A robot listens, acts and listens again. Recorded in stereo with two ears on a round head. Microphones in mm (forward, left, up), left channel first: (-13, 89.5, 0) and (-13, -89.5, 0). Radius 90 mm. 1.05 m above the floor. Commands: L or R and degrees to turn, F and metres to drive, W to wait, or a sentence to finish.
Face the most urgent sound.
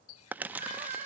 R40
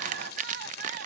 R95
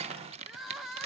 Found it: crying, straight ahead, 1 to 2 m away.